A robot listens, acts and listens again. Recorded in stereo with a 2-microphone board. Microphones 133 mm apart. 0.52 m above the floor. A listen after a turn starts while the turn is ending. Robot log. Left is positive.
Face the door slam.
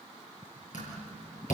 note: The door slam: about 65° left or 115° left.
cmd yaw +65
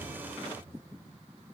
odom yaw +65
cmd idle
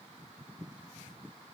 end: I heard a door slam, but can't make it out now. It was about straight ahead or 50° left.